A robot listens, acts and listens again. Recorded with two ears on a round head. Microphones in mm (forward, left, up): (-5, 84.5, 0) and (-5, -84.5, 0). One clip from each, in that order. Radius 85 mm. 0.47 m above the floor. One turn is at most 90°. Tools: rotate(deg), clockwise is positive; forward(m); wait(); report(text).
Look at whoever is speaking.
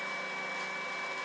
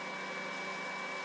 wait()
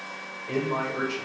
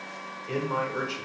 rotate(45)
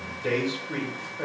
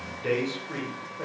rotate(10)
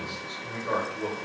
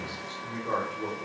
report("Found it: a man speaking, straight ahead.")